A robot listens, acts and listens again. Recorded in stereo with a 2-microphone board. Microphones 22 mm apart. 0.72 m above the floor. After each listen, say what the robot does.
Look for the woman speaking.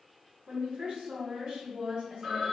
Turn 55° right.
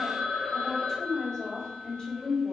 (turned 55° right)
Turn 30° left.
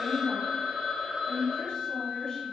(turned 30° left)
Turn 40° left.
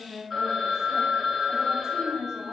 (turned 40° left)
Facing the woman speaking, 1 to 2 m away.